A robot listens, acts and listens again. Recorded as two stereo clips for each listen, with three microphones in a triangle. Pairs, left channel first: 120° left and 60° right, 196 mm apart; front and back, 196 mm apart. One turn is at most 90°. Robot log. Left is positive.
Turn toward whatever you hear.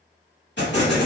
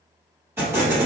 note: The explosion: 100° left.
cmd yaw +90
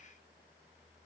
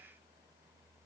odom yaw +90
note: Nothing new. It was at 10° left.
cmd yaw +10
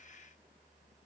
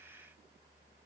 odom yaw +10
end: Facing where the explosion came from. I can't hear it now.